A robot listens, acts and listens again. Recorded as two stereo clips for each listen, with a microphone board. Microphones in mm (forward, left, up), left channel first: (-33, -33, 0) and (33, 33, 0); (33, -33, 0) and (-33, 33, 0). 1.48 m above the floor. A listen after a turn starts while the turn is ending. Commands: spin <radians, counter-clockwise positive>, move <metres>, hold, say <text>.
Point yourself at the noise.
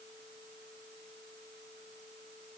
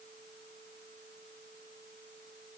hold
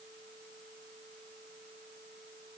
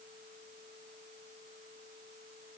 hold
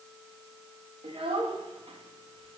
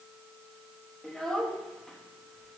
spin 0.70
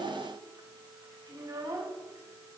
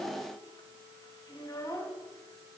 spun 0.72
say Found it: a child speaking, straight ahead.